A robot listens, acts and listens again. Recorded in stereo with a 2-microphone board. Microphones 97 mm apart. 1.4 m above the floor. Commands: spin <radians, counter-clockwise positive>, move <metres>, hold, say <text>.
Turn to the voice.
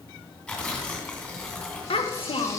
spin 1.13
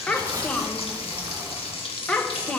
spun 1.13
spin 0.26
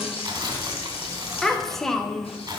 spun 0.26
say Found it: a child speaking, straight ahead.